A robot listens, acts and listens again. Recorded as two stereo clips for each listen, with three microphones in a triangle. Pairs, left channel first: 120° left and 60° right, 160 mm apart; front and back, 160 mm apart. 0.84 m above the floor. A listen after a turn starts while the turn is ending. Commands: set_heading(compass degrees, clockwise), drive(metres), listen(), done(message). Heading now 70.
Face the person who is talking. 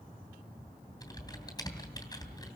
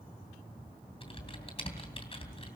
listen()
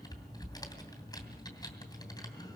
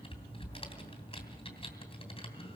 listen()
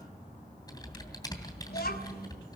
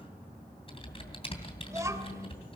set_heading(320)
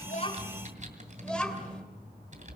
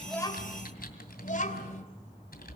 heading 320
set_heading(285)
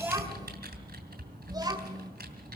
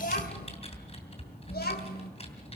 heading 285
done("Facing the child speaking.")